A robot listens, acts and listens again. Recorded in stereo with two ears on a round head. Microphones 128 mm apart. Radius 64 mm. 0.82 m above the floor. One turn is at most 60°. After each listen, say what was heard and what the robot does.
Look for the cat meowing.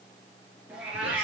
Turn 30° right.
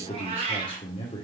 So it is at 135° right. Turn 60° right.
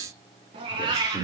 The cat meowing is now 30° right. Turn 30° right.
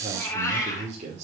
The cat meowing is now 25° left. Turn 25° left.
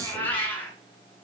The cat meowing is now 10° left. Turn 10° left.
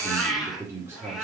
Found it: a cat meowing, straight ahead, 2 to 4 m away.